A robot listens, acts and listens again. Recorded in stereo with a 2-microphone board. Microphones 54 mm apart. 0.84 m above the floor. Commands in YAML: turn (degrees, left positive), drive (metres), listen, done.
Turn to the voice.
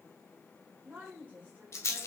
turn: -30
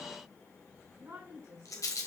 turn: -120
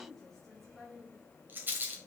turn: 10
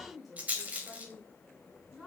done: "Facing the woman speaking, 2 to 4 m away."